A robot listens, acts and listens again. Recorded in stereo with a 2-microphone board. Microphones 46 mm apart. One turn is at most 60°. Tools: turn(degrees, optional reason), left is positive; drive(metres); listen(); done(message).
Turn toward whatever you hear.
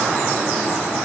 listen()
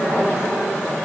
listen()
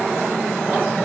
done("I can't make out anything.")